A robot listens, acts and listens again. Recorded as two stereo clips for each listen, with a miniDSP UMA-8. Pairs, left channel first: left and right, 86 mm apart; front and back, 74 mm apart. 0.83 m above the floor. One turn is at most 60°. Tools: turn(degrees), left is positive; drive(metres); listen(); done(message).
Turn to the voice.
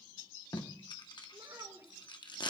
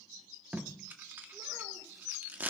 listen()
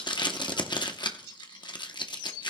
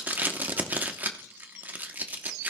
listen()
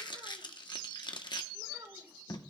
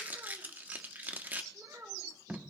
turn(degrees=-60)
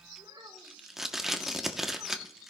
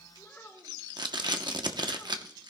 turn(degrees=-60)
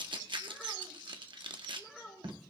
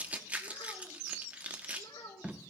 done("Found it: a child speaking, straight ahead, over 4 m away.")